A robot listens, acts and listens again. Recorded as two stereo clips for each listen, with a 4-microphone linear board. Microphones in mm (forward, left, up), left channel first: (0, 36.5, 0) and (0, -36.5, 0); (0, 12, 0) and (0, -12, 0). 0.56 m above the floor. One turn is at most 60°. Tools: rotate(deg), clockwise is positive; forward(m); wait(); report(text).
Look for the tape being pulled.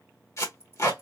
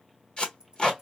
rotate(-45)
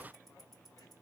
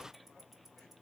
wait()
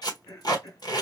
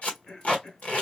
rotate(-60)
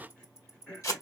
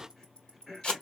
rotate(-50)
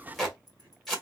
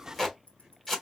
report("Facing the tape being pulled.")